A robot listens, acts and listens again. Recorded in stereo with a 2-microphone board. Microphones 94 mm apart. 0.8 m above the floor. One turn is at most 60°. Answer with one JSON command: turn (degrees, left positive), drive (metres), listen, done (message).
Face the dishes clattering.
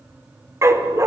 {"listen": true}
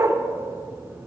{"listen": true}
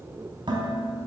{"turn": -55}
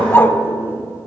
{"listen": true}
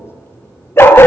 {"listen": true}
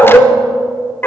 {"done": "I heard dishes clattering, but can't make it out now. It was about straight ahead or 70° right."}